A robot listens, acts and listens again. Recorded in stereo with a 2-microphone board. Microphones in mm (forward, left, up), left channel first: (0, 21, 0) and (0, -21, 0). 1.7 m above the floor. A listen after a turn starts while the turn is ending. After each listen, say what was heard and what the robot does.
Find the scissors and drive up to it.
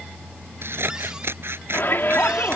The scissors: about 70° right or 110° right. Turn 70° right.
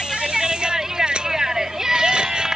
Keep listening.
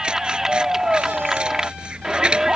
So it is at 25° right. Turn 25° right.
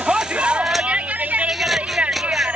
Keep listening.
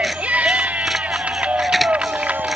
Keep listening.
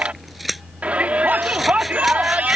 Drive 1.0 m forward.
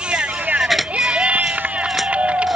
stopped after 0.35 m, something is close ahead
Blocked. The scissors is further on, straight ahead.